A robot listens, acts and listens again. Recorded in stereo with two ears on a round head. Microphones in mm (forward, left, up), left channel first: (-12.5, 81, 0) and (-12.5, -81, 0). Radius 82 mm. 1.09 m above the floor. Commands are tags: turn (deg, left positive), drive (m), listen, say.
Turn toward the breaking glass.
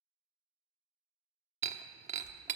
<turn deg="-40"/>
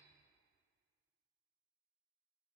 <listen/>
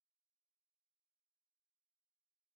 <say>I heard breaking glass, but can't make it out now. It was about straight ahead or 100° right.</say>